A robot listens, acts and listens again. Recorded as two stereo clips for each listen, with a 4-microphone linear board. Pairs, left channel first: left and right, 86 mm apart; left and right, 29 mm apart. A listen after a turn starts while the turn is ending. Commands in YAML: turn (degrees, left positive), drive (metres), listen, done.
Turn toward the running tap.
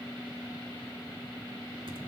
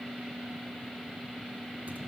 listen: true
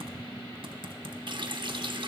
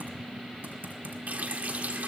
turn: -60
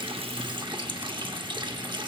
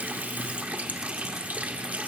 turn: -60
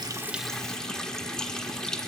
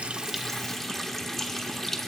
turn: 10
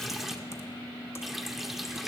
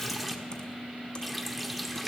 done: "Found it: a running tap, straight ahead, under 1 m away."